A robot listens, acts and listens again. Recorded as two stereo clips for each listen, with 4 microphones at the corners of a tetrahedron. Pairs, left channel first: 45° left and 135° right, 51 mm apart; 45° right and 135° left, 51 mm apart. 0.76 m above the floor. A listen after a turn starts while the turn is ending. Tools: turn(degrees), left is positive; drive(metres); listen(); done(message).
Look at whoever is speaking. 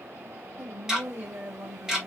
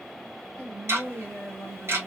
turn(degrees=-115)
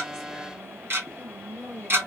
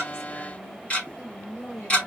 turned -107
done("Found it: a woman speaking, straight ahead.")